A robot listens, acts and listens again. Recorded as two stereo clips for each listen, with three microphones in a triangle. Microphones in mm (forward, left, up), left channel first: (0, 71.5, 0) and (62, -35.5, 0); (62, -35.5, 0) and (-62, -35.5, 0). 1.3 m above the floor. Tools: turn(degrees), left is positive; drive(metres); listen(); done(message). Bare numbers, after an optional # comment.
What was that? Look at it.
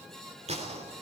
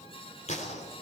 # The gunshot: 25° right.
turn(-25)
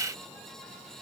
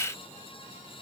done("Facing where the gunshot came from. I can't hear it now.")